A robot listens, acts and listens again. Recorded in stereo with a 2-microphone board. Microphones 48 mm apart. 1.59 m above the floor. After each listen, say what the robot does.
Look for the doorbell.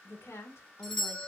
Turn 30° left.
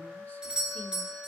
Turn 15° right.
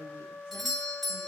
Facing the doorbell, 1 to 2 m away.